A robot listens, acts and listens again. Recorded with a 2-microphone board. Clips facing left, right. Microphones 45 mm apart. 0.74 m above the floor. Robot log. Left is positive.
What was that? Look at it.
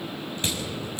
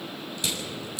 note: The crushing: about 35° left or 145° left.
cmd yaw +35
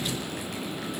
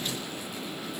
cmd idle
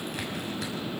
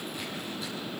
cmd idle
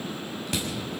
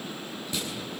note: So it is at 110° left.
cmd yaw +110
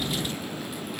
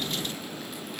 cmd idle
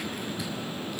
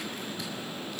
end: Facing the crushing, over 4 m away.